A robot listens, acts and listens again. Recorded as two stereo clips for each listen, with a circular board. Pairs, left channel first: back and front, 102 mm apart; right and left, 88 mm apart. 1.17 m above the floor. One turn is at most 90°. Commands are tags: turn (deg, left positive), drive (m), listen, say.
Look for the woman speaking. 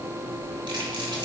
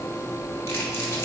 <listen/>
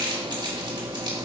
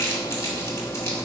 <listen/>
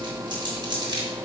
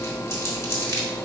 <say>I can't make out a woman speaking, only crumpling.</say>